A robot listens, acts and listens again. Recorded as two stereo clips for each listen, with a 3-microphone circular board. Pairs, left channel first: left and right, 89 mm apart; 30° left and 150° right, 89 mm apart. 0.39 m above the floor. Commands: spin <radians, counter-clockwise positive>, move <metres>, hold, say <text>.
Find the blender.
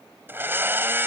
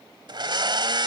spin -2.62
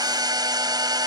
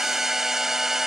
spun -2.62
spin -1.13
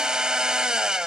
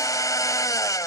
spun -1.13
spin -0.17
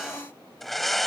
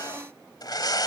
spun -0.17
say Found it: a blender, straight ahead.